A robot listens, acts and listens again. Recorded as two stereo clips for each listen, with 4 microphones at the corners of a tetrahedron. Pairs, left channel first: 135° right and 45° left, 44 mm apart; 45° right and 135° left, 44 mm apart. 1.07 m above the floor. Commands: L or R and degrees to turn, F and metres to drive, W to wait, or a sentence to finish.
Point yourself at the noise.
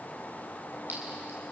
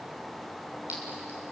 L85
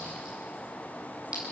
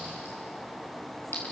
R20
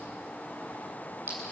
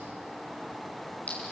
Found it: a clink, straight ahead.